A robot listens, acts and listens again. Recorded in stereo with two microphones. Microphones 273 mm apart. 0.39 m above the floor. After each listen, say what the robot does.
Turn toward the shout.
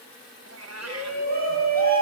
Turn 35° right.
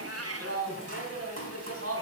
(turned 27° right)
Turn 115° right.
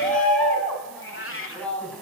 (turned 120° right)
Found it: a shout, straight ahead, 2 to 4 m away.